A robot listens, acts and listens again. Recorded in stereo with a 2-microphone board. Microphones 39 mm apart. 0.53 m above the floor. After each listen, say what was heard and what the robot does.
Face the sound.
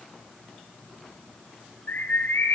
Turn 90° left.
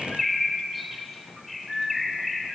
Facing the bird, 1 to 2 m away.